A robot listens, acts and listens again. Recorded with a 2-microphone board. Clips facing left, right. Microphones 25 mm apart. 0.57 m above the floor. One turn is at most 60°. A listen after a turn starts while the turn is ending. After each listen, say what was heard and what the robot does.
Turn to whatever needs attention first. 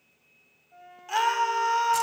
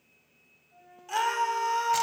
The scream: about 15° left or 165° left. Turn 15° left.
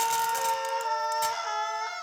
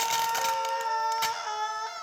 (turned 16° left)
Facing the scream.